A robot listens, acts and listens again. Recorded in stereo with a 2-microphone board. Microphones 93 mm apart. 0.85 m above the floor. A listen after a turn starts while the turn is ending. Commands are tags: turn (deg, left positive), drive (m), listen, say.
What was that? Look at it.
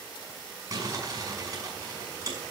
<turn deg="-40"/>
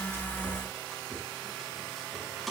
<listen/>
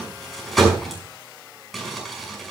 <say>Found it: crumpling, straight ahead, over 4 m away.</say>